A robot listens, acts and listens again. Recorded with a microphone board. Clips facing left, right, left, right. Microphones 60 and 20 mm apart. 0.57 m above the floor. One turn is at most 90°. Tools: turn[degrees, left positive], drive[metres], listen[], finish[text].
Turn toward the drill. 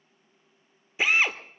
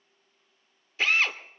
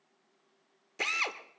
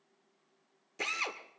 Action: turn[30]
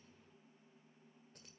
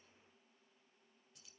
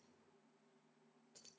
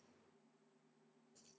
Action: listen[]
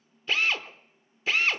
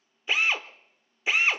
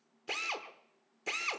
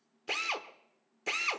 Thought: So it is at 15° right.
Action: turn[-15]
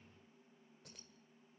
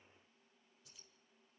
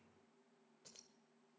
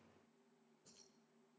Action: listen[]
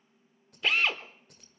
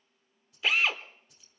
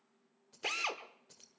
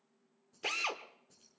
Action: finish[Facing the drill, under 1 m away.]